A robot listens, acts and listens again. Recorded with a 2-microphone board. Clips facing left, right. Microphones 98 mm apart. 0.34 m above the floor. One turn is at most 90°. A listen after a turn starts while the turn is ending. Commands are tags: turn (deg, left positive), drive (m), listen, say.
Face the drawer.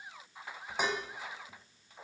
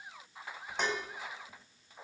<listen/>
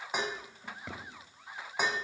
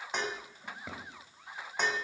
<turn deg="-30"/>
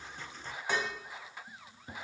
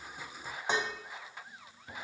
<turn deg="25"/>
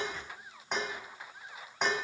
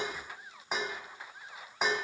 <listen/>
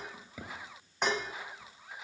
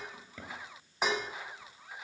<turn deg="10"/>
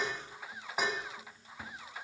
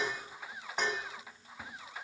<listen/>
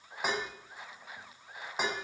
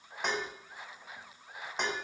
<listen/>
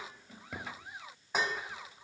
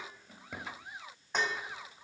<say>Found it: a drawer, straight ahead, 2 to 4 m away.</say>